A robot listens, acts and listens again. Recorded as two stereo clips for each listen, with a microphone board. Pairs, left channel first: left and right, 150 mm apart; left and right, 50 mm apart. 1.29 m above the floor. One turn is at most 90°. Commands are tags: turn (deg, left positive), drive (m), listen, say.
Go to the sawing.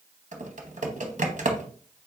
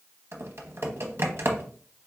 <listen/>
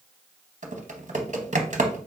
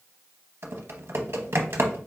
<listen/>
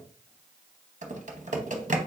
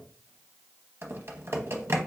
<say>I can't make out sawing, only typing on a keyboard.</say>